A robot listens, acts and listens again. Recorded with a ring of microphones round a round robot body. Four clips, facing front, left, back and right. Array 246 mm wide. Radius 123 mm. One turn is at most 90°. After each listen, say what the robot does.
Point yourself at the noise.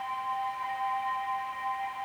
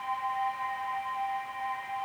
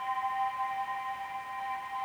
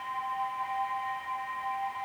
Keep listening.
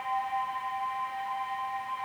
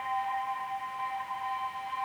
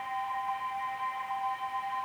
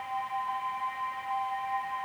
Keep listening.
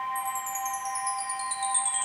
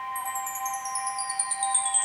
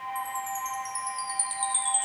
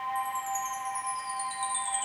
Turn 75° left.
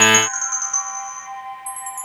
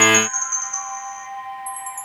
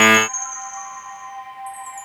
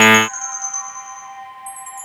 Found it: a chime, straight ahead.